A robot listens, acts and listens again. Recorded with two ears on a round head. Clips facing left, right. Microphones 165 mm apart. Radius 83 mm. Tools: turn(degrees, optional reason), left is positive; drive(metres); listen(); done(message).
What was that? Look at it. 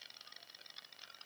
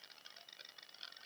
listen()
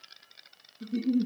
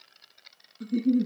turn(degrees=-70, reason="The giggle: about 70° right or 110° right.")
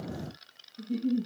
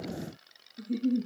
turn(degrees=-35, reason="So it is at 35° right.")
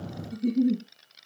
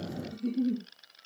turn(degrees=15, reason="The giggle is now 15° left.")
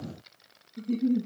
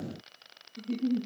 done("Found it: a giggle, straight ahead, 2 to 4 m away.")